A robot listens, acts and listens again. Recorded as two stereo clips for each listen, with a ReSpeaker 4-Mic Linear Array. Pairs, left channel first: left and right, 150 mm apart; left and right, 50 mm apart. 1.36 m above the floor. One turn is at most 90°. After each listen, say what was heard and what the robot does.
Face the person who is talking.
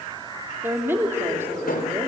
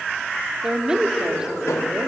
Turn 30° right.
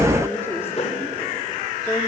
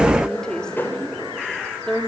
So it is at 15° left. Turn 15° left.
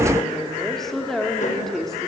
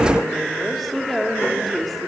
Found it: a woman speaking, straight ahead, 2 to 4 m away.